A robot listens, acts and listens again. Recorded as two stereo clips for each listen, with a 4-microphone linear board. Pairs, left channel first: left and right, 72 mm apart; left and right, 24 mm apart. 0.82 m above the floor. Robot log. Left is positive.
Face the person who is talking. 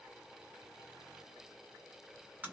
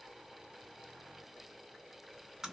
cmd idle
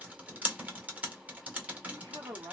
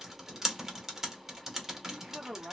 note: The man speaking: about 60° right or 120° right.
cmd yaw -60
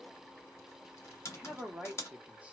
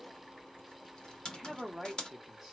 note: So it is at 20° right.
cmd yaw -20
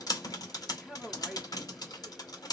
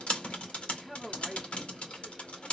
end: Found it: a man speaking, straight ahead.